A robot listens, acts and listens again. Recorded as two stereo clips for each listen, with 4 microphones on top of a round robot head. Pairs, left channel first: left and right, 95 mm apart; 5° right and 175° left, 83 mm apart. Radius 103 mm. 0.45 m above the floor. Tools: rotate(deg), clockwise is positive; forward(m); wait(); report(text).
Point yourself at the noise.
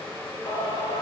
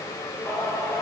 rotate(-65)
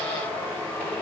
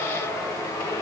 rotate(-20)
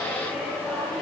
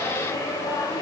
report("Found it: singing, straight ahead.")